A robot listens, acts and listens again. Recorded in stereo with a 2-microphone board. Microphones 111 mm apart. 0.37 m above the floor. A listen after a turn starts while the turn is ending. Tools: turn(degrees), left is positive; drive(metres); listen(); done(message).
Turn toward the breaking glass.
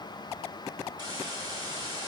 listen()
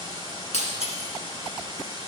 turn(degrees=70)
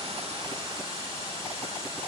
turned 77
listen()
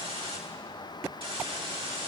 done("I heard breaking glass, but can't make it out now. It was about 10° right or 35° left.")